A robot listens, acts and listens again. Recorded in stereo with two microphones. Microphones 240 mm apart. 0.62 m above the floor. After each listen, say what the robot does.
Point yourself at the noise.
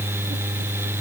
Keep listening.
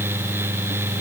Keep listening.
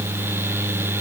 I can't make out anything to turn to.